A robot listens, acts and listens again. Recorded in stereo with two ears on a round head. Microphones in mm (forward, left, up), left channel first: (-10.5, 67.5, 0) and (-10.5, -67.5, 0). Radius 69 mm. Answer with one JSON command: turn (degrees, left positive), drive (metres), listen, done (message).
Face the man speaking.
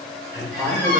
{"turn": -25}
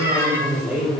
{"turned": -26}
{"done": "Found it: a man speaking, straight ahead."}